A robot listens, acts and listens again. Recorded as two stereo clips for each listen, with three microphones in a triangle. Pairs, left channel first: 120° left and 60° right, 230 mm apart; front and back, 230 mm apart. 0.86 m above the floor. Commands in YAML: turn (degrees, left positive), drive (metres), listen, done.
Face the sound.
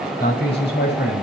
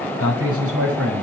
turn: 160
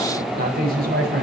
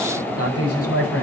turn: -10
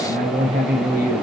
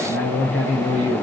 turn: -10
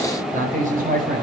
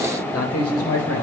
done: "Facing the man speaking."